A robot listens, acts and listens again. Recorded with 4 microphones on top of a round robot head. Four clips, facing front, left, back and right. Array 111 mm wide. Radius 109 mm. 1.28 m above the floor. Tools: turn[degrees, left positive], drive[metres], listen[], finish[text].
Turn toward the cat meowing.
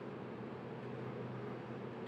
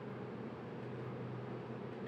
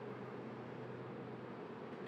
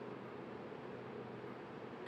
Action: listen[]
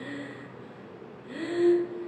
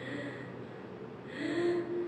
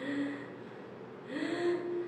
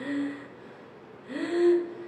Action: listen[]
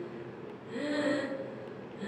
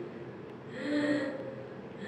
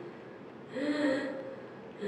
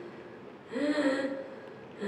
Action: finish[I can't make out a cat meowing to turn to.]